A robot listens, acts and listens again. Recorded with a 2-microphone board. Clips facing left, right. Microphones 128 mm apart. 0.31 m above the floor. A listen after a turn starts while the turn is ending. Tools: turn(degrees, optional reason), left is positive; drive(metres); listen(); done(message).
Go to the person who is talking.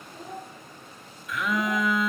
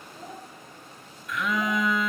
turn(degrees=30)
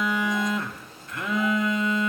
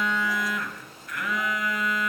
listen()
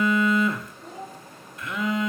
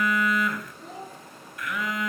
turn(degrees=-30, reason="So it is at 30° right.")
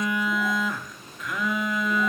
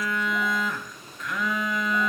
listen()
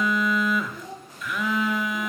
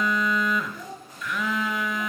drive(metres=1.0)
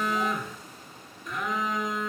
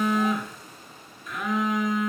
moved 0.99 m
listen()
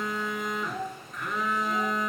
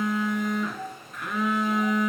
drive(metres=1.0)
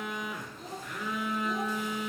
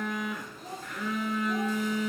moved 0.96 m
listen()
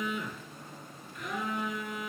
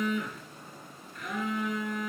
listen()
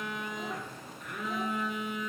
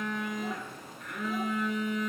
done("Facing where the child speaking came from. I can't hear it now. I did not reach it.")